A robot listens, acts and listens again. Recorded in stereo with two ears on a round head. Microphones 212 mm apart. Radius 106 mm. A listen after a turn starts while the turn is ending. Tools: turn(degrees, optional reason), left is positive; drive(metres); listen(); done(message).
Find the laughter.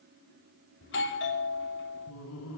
turn(degrees=70, reason="The laughter: about 70° left or 110° left.")
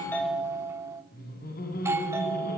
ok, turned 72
turn(degrees=40, reason="So it is at 40° left.")
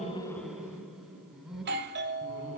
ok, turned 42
done("Facing the laughter, over 4 m away.")